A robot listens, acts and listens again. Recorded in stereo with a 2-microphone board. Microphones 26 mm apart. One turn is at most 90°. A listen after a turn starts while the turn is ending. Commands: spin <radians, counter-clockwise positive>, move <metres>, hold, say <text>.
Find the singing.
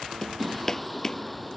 spin 0.52
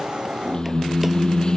spin 1.57
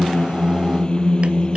spin 0.70
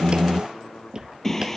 spin 0.26
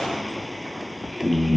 say Found it: singing, straight ahead.